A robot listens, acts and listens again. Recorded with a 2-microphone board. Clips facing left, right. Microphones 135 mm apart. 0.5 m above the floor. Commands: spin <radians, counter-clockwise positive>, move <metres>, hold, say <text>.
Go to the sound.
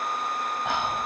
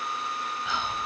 spin 1.05
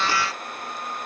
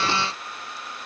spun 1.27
hold
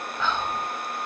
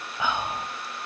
spin -0.17
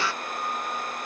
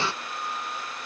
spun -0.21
hold
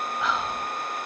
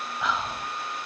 move 1.0
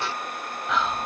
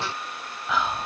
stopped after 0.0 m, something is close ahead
say Something is in my way. I am facing the whispering but have not reached it.